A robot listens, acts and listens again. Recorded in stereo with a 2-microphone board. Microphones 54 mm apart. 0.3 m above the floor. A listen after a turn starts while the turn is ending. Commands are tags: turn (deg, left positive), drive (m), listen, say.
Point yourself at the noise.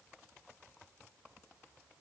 <listen/>
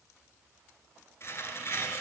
<turn deg="50"/>
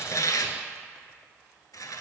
<turn deg="85"/>
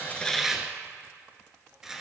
<turn deg="-10"/>
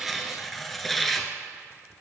<say>Facing the tearing paper.</say>